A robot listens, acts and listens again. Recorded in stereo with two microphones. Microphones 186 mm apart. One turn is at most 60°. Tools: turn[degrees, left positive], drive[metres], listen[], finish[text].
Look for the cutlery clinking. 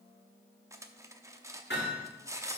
Thought: The cutlery clinking: about 15° right or 165° right.
Action: turn[-15]
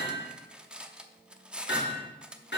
Action: finish[Found it: cutlery clinking, straight ahead, under 1 m away.]